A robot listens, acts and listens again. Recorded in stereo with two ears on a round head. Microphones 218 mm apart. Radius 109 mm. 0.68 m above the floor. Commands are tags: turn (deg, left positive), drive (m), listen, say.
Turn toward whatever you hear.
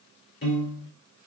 <turn deg="50"/>
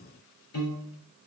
<turn deg="80"/>
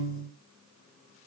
<turn deg="-30"/>
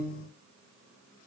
<turn deg="10"/>
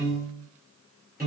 <say>Found it: a piano, straight ahead, 1 to 2 m away.</say>